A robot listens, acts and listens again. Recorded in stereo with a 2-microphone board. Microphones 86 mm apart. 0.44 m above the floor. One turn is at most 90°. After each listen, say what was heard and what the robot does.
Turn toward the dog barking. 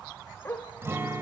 The dog barking: about 25° left or 155° left. Turn 25° left.
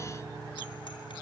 Keep listening.
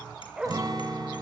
So it is at 10° right. Turn 10° right.
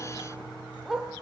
Facing the dog barking, 2 to 4 m away.